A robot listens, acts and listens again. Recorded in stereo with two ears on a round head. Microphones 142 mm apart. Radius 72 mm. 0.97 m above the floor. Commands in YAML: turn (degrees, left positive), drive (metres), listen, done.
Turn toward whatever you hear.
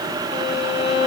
turn: 40
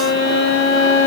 turn: 100
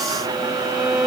turn: -10
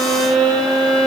done: "Found it: a violin, straight ahead, 1 to 2 m away."